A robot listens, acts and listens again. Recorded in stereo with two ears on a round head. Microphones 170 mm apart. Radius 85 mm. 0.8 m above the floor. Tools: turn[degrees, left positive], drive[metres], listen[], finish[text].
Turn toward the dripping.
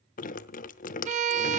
Thought: The dripping: about 45° left or 135° left.
Action: turn[45]
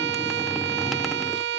Action: finish[Found it: dripping, straight ahead.]